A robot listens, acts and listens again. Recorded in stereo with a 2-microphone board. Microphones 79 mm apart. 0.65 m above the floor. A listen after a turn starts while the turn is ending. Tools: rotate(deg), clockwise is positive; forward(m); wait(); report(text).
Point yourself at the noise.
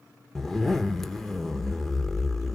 rotate(-30)
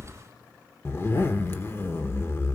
rotate(-145)
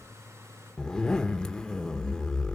rotate(-10)
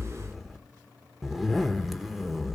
report("Found it: a zipper, straight ahead.")